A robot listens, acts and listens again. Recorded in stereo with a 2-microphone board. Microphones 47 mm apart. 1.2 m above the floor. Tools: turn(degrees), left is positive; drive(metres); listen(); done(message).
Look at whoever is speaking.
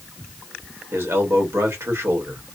turn(degrees=-90)
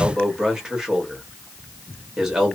turn(degrees=-10)
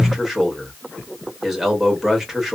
done("Facing the man speaking.")